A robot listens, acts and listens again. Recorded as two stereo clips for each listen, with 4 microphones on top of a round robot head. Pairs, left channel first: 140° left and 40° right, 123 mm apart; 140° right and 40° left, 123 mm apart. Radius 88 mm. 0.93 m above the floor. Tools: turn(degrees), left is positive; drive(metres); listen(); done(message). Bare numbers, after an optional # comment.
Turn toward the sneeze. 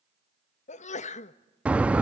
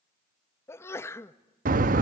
# The sneeze: 150° left.
turn(150)
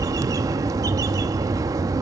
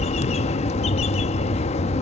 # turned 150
done("I heard a sneeze from this way, but can't make it out now.")